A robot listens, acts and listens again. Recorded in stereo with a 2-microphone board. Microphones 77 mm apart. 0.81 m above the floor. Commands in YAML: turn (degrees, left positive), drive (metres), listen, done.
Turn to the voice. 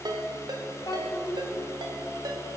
turn: 70
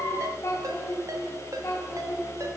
turn: 40
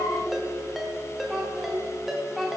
done: "Found it: a child speaking, straight ahead."